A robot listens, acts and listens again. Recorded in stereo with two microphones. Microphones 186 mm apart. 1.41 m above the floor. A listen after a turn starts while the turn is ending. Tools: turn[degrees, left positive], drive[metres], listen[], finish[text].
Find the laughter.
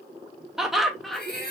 Action: turn[30]
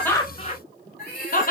Thought: So it is at 130° left.
Action: turn[130]
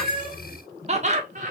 Thought: The laughter is now 40° right.
Action: turn[-40]
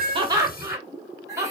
Thought: The laughter is now 15° right.
Action: turn[-15]
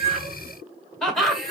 Action: finish[Facing the laughter, 1 to 2 m away.]